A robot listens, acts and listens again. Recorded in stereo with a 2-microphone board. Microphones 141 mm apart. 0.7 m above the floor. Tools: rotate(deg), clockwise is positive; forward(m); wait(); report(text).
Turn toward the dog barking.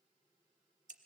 wait()
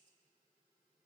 wait()
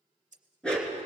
rotate(-30)
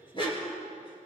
rotate(-145)
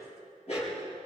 rotate(-50)
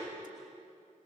wait()
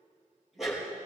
report("Facing the dog barking, over 4 m away.")